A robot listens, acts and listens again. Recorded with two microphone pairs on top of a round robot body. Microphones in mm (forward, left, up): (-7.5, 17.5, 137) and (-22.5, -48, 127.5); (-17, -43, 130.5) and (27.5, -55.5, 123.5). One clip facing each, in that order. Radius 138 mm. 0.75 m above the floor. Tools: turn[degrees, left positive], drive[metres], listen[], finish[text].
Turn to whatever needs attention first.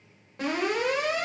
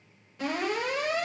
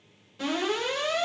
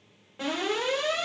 Thought: The alarm: 35° left.
Action: turn[35]
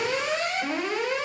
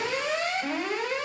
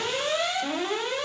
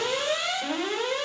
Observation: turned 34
Action: finish[Found it: an alarm, straight ahead.]